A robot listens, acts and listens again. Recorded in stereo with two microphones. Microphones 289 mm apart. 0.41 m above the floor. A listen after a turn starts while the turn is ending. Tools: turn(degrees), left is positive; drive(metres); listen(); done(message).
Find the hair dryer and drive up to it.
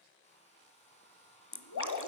turn(degrees=20)
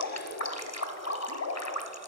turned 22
listen()
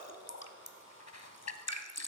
turn(degrees=135)
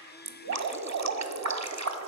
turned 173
turn(degrees=-35)
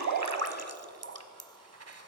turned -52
turn(degrees=15)
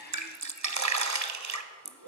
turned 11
done("I heard a hair dryer from this way, but can't make it out now. I did not reach it.")